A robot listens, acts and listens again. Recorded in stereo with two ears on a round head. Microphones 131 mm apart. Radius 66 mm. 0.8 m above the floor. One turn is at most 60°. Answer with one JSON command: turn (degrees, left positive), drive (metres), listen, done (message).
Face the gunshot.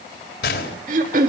{"turn": 60}
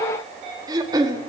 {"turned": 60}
{"turn": 30}
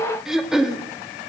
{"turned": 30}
{"done": "I heard a gunshot from this way, but can't make it out now."}